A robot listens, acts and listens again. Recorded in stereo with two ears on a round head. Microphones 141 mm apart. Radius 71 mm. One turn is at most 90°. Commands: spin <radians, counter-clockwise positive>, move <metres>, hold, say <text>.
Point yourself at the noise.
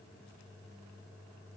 hold
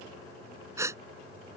spin -0.35
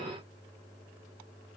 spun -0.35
hold
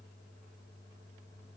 say I heard a gasp, but can't make it out now. It was about straight ahead or 140° right.